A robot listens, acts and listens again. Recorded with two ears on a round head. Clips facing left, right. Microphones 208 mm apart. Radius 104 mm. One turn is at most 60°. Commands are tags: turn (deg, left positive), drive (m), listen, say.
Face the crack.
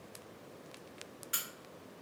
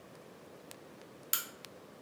<turn deg="-55"/>
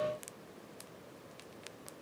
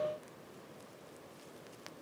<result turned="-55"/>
<listen/>
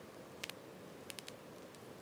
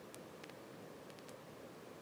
<say>I heard a crack, but can't make it out now. It was about straight ahead or 70° right.</say>